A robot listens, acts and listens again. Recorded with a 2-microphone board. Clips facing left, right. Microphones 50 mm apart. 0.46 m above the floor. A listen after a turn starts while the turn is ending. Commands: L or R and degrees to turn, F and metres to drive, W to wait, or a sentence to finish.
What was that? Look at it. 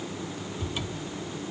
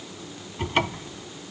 R65
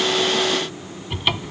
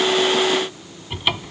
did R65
Found it: a cupboard door, straight ahead.